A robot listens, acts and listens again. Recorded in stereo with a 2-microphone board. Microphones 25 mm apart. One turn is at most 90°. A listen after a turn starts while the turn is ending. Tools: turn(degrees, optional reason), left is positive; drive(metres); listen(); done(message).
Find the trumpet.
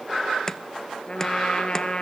turn(degrees=40, reason="The trumpet: about 40° left or 140° left.")
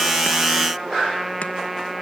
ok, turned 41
done("Facing the trumpet, 2 to 4 m away.")